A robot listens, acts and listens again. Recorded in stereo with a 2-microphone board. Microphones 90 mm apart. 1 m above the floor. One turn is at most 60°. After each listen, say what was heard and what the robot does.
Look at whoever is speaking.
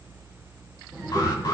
The child speaking: about 30° right or 150° right. Turn 30° right.
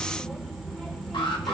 Facing the child speaking.